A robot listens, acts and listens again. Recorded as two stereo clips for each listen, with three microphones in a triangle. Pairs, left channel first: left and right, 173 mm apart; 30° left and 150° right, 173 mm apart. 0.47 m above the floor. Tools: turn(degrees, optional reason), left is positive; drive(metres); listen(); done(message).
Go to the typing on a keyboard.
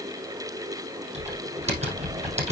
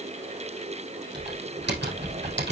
turn(degrees=-145, reason="The typing on a keyboard: 145° right.")
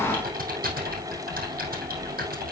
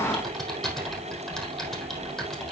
turn(degrees=-60, reason="The typing on a keyboard is now 60° right.")
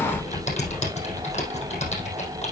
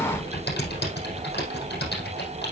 turn(degrees=40, reason="The typing on a keyboard is now 40° left.")
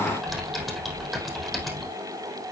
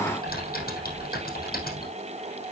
drive(metres=1.0)
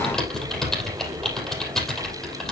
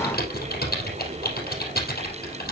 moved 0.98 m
drive(metres=1.0)
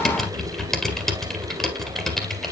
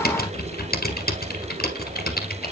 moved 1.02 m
drive(metres=1.0)
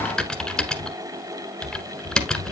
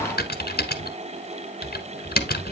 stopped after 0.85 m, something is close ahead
done("I am next to the typing on a keyboard.")